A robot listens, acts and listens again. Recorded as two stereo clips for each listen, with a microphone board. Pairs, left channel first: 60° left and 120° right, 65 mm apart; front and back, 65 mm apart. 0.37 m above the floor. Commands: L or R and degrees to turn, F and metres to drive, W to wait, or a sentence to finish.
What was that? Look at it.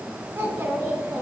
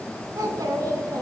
R160
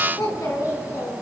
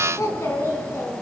L45
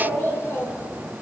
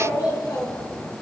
Facing the child speaking, 2 to 4 m away.